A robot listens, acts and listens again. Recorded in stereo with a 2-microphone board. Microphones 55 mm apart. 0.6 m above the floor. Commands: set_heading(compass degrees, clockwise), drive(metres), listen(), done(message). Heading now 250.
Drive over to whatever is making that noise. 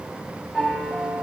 set_heading(220)
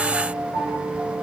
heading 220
set_heading(240)
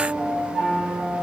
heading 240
drive(1.0)
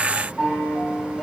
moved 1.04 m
drive(1.0)
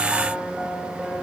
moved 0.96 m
drive(1.0)
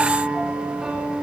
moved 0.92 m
set_heading(250)
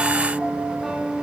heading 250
drive(1.0)
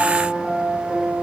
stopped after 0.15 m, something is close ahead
done("I am next to the piano.")